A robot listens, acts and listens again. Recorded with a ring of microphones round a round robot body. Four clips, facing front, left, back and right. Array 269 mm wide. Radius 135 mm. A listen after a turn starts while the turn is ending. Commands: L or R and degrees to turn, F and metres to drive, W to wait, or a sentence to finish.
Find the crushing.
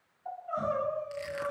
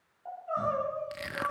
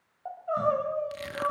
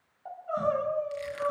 L130
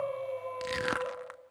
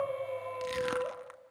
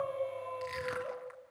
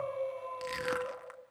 Found it: crushing, straight ahead, under 1 m away.